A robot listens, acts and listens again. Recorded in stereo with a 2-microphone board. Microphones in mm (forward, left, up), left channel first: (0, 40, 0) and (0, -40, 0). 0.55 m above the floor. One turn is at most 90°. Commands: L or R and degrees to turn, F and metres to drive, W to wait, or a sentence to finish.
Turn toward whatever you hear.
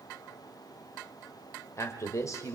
L40
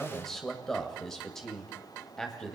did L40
Facing the man speaking.